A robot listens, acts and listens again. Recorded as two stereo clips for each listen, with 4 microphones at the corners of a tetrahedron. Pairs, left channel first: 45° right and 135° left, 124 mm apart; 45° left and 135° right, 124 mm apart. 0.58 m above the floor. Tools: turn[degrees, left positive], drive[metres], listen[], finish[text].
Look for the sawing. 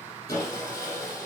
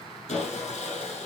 Thought: The sawing: 15° left.
Action: turn[15]
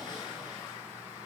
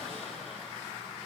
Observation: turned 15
Action: listen[]
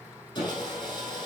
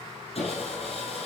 Action: finish[Facing the sawing.]